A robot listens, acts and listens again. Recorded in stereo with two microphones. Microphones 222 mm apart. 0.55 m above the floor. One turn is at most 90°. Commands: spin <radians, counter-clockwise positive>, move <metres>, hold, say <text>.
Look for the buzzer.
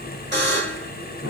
spin -0.87
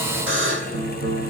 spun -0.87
spin -1.31
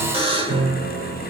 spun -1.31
spin -0.44
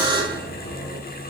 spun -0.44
spin -0.35
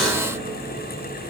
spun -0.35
hold
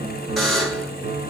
say Facing the buzzer, 1 to 2 m away.